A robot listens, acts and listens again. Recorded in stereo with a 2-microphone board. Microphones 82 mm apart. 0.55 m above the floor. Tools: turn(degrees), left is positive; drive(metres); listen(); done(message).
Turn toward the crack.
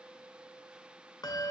listen()
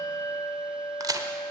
turn(degrees=-50)
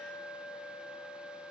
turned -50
listen()
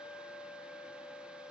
done("I heard a crack, but can't make it out now. It was about straight ahead or 80° right.")